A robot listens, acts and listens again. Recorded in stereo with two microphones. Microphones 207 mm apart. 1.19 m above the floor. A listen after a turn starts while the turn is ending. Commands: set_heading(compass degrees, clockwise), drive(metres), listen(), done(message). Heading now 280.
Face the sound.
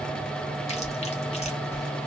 set_heading(250)
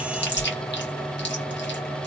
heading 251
set_heading(131)
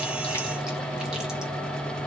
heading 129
listen()
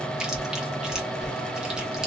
done("Found it: chewing, straight ahead.")